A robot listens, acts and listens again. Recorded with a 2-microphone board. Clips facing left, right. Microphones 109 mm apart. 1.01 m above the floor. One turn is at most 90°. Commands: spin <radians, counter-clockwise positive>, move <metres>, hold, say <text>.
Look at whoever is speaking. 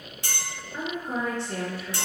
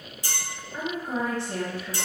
spin -0.52
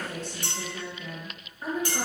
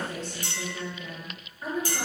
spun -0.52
spin 0.26
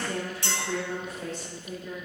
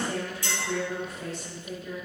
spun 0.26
say Found it: a woman speaking, straight ahead.